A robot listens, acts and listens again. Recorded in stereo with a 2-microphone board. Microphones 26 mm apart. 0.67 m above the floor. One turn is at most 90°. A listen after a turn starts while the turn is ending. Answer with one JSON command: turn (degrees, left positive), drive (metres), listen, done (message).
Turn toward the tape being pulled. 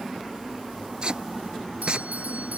{"turn": -35}
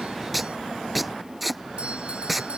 {"done": "Found it: tape being pulled, straight ahead."}